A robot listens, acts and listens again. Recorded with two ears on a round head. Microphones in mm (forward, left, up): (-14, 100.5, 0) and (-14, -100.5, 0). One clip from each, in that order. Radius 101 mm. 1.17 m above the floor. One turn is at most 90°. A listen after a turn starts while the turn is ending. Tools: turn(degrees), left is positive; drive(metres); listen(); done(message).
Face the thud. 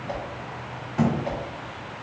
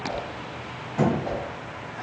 turn(degrees=30)
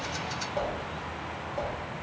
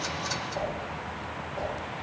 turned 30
listen()
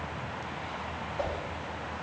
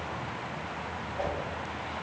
done("I heard a thud, but can't make it out now. It was about 20° right or 140° left.")